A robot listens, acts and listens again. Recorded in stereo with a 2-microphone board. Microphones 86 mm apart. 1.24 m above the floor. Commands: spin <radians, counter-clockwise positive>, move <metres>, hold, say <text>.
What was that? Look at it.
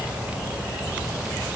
hold
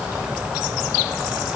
hold
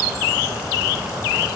say I can't make out anything to turn to.